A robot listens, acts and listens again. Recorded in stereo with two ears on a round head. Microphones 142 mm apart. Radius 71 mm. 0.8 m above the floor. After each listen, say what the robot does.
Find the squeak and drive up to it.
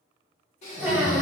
Turn 30° right.
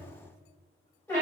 Turn 15° left.
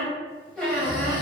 Drive 1.0 m forward.
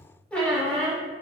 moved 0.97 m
Turn 10° left.
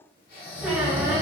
Drive 1.0 m forward.
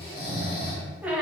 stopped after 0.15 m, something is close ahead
Turn 10° right.
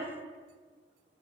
Keep listening.
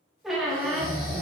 I am next to the squeak.